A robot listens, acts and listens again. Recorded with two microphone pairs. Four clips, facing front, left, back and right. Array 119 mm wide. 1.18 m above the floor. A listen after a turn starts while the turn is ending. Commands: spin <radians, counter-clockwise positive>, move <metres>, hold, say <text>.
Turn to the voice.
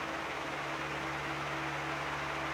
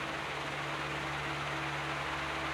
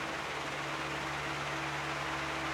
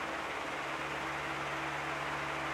hold
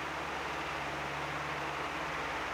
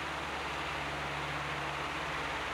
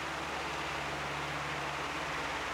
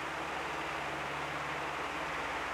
hold
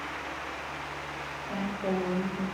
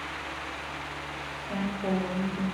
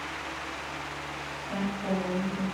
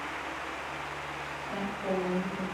spin 0.61
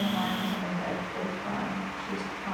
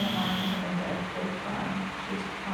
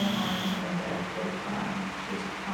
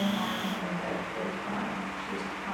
say Found it: a woman speaking, straight ahead.